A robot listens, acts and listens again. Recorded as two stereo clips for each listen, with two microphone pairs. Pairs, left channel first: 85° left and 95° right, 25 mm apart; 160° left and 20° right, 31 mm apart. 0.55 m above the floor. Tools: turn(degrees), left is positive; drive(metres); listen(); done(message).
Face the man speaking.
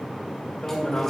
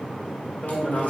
turn(degrees=130)
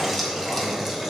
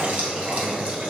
listen()
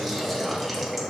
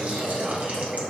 listen()
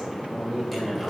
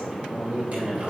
turn(degrees=10)
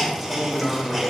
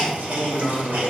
turn(degrees=10)
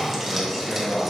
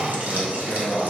done("Found it: a man speaking, straight ahead.")